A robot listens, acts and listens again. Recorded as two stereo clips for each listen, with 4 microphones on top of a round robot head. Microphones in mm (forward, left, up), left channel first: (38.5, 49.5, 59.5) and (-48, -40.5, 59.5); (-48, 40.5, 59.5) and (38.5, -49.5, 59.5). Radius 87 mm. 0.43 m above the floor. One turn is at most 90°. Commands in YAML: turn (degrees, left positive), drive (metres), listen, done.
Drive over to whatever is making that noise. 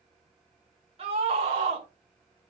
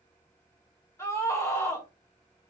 turn: -90
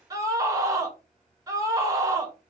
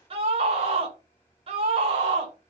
turn: -75
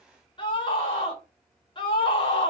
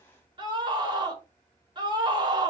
drive: 1.0
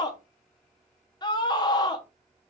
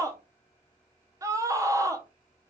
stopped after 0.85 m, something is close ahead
done: "Arrived at the scream, straight ahead."